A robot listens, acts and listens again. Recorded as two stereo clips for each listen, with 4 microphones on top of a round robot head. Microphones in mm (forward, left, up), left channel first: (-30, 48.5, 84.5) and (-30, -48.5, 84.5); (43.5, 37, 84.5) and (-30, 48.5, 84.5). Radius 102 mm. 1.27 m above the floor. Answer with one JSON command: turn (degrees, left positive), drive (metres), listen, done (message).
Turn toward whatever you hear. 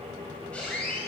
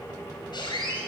{"turn": 10}
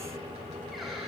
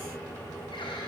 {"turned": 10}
{"listen": true}
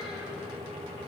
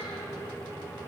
{"listen": true}
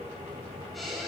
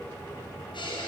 {"done": "Facing the squeak, over 4 m away."}